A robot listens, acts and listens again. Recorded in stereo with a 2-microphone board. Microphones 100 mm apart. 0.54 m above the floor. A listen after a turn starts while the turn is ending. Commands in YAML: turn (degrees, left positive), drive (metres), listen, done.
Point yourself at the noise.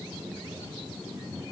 listen: true
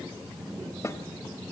turn: 30
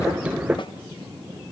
listen: true
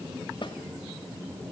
turn: 120
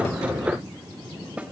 turn: -15
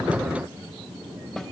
listen: true
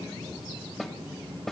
done: "Facing the snare drum, 1 to 2 m away."